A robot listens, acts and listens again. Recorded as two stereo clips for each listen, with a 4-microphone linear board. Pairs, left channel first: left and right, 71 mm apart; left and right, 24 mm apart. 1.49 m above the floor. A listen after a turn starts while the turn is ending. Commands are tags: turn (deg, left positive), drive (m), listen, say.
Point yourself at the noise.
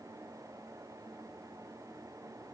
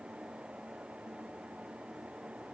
<listen/>
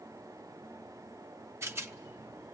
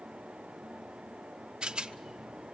<turn deg="-40"/>
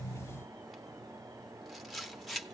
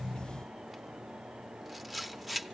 <say>Found it: a rattle, straight ahead, under 1 m away.</say>